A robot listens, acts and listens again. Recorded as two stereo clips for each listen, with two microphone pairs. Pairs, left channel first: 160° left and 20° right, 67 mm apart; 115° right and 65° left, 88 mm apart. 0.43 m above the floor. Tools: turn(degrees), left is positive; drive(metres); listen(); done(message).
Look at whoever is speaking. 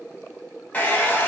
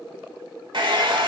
listen()
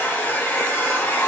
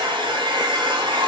listen()
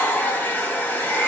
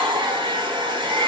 done("I can't make out anyone speaking to turn to.")